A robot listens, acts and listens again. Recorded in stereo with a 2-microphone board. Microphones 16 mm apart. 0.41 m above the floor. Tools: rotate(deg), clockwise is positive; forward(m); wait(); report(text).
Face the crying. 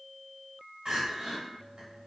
rotate(50)
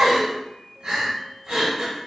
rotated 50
rotate(75)
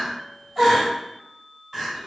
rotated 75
rotate(20)
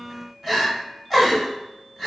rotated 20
report("Facing the crying.")